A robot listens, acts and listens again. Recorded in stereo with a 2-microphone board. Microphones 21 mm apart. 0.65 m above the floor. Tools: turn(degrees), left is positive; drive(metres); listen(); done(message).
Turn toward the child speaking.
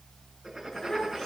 turn(degrees=30)
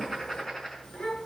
turn(degrees=120)
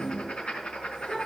turn(degrees=30)
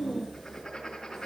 turn(degrees=-10)
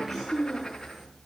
done("Found it: a child speaking, straight ahead, over 4 m away.")